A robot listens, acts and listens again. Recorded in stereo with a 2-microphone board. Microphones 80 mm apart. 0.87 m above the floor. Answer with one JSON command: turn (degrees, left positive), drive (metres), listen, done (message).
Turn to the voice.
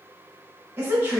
{"turn": -30}
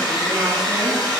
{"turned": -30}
{"listen": true}
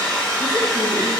{"listen": true}
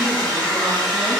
{"done": "I heard a woman speaking, but can't make it out now. It was about straight ahead or 120° right."}